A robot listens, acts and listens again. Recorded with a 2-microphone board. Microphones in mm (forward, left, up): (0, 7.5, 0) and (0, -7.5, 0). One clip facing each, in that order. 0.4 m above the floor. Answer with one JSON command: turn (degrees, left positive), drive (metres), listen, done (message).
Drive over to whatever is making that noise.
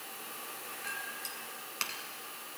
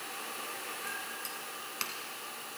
{"turn": 30}
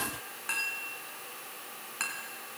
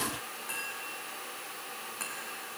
{"turn": 140}
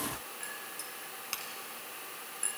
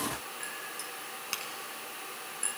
{"turn": -15}
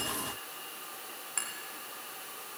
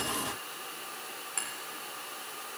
{"drive": 1.0}
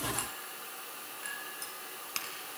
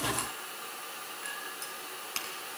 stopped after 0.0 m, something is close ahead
{"done": "Blocked. The clink is further on, straight ahead."}